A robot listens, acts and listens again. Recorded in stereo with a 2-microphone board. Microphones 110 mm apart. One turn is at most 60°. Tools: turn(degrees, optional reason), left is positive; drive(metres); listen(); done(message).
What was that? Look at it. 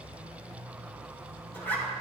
turn(degrees=15, reason="The zipper: about 15° left or 165° left.")
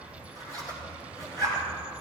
turn(degrees=60, reason="So it is at 150° left.")
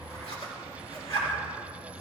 turn(degrees=60, reason="The zipper is now 75° left.")
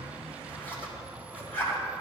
turn(degrees=20, reason="The zipper is now 20° left.")
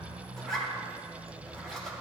done("Found it: a zipper, straight ahead, 2 to 4 m away.")